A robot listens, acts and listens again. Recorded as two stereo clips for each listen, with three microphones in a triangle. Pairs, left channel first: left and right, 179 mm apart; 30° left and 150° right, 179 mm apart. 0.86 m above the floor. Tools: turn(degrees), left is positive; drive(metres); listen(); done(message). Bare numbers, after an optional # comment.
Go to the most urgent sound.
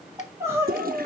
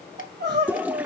# The crying: 165° right.
turn(-165)
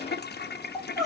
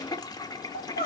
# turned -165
drive(1.0)
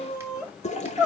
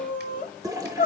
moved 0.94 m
drive(1.0)
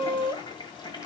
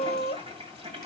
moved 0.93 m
# The crying is now 20° right.
turn(-20)
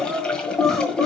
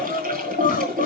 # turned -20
drive(1.0)
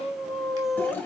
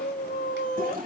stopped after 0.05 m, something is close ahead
done("Arrived at the crying, straight ahead.")